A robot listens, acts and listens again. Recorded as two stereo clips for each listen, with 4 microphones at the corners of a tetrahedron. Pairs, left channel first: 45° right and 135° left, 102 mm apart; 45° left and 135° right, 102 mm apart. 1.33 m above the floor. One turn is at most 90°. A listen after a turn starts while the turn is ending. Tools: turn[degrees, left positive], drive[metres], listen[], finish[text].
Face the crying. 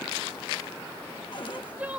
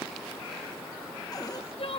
Thought: The crying: 60° left.
Action: turn[60]
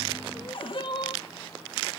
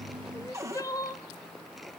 Thought: The crying is now 10° right.
Action: turn[-10]
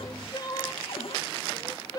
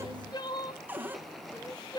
Action: finish[Facing the crying, 1 to 2 m away.]